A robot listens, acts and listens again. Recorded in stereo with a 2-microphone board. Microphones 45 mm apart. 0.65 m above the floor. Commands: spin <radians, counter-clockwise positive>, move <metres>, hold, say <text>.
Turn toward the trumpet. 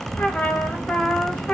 spin 0.52
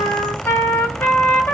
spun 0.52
spin 2.09
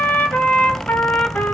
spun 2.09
spin 0.79
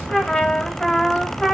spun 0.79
spin 0.17
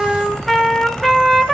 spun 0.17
say Facing the trumpet, 1 to 2 m away.